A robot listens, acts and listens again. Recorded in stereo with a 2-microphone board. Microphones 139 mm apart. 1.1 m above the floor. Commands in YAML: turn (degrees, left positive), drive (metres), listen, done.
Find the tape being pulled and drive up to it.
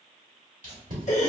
turn: -70
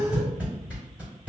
turn: -10
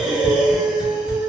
listen: true
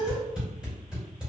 drive: 1.0
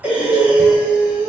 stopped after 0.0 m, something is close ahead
listen: true
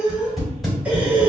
done: "Something is in my way. I am facing the tape being pulled but have not reached it."